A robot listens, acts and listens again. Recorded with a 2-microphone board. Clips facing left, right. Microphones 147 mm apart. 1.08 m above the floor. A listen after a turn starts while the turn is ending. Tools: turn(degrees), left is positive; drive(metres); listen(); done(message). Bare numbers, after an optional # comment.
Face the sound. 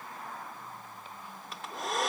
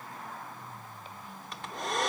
turn(30)
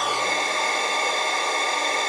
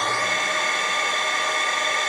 # So it is at 145° left.
turn(145)
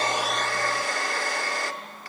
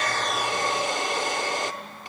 # The hair dryer is now 25° right.
turn(-25)
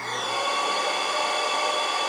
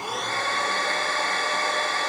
# The hair dryer is now 15° left.
turn(15)
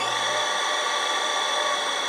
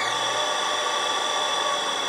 done("Found it: a hair dryer, straight ahead, 1 to 2 m away.")